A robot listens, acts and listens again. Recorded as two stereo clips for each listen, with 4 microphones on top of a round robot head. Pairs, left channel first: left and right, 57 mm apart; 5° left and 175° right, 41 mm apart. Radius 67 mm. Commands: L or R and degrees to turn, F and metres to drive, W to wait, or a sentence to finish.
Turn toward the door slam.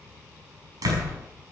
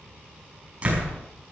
R115
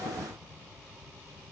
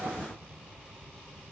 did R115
Facing where the door slam came from. I can't hear it now.